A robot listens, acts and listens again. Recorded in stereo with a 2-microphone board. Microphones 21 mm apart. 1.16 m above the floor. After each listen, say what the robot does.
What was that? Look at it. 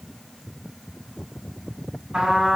Turn 45° right.
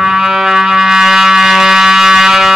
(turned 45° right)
Turn 85° right.
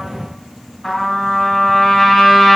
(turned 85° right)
Facing the trumpet, 1 to 2 m away.